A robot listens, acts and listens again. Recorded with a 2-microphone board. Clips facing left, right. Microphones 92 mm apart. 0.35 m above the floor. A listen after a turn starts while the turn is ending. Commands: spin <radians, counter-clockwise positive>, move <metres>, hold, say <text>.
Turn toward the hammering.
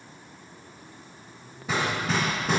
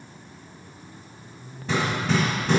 spin 0.52
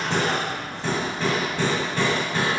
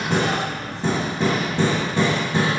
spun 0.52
spin -0.44
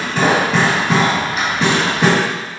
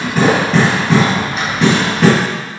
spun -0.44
say Facing the hammering.